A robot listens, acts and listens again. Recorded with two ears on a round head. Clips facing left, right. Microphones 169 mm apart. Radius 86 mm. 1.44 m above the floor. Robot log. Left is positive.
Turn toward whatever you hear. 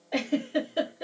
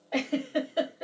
note: The giggle: about 40° left or 140° left.
cmd yaw +40
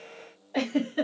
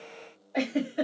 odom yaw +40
note: So it is at 100° left.
cmd yaw +100
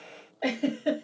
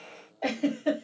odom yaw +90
note: The giggle is now 10° left.
cmd yaw +10
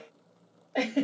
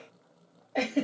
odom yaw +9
end: Facing the giggle, 1 to 2 m away.